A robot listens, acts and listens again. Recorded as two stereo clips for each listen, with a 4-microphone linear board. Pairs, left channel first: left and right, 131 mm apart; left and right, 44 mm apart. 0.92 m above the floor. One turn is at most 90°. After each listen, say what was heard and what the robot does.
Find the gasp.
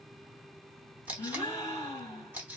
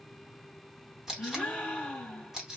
The gasp: about 25° left or 155° left. Turn 25° left.
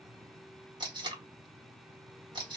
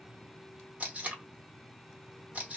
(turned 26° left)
Keep listening.
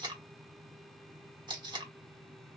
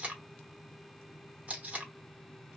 I heard a gasp, but can't make it out now. It was about straight ahead or 130° left.